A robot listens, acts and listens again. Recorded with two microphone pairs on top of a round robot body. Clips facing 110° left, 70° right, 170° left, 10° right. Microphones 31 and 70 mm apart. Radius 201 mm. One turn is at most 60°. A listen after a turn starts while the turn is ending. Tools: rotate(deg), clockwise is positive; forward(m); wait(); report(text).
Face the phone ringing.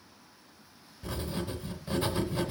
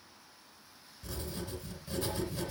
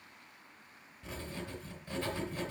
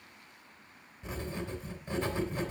wait()
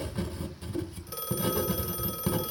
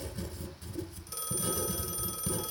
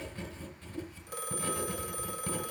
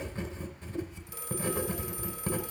rotate(-60)
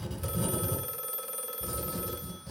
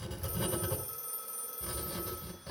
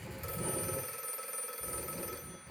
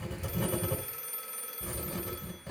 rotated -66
rotate(-60)
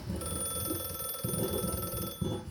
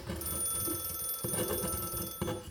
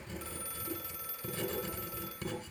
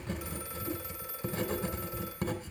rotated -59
rotate(-55)
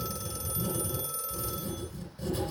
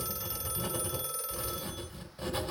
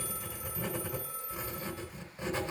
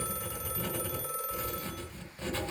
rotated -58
report("Facing the phone ringing.")